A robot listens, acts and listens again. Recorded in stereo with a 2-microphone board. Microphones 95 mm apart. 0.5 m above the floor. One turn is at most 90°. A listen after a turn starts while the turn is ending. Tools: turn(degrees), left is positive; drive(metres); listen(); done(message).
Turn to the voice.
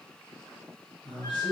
turn(degrees=55)
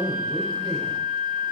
listen()
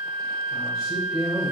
turn(degrees=45)
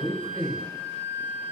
turn(degrees=15)
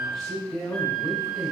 done("Facing the man speaking.")